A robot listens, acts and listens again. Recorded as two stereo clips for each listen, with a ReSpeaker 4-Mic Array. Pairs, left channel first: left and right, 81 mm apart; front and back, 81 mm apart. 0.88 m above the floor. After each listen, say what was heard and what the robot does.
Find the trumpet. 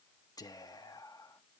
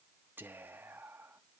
Keep listening.
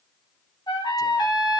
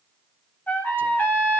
The trumpet: 65° left. Turn 65° left.
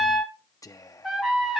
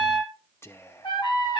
Facing the trumpet, 2 to 4 m away.